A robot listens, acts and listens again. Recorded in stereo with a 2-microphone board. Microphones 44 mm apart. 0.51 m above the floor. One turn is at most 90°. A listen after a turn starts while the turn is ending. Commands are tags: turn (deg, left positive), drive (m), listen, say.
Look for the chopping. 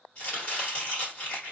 <turn deg="30"/>
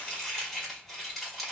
<say>Found it: chopping, straight ahead, 1 to 2 m away.</say>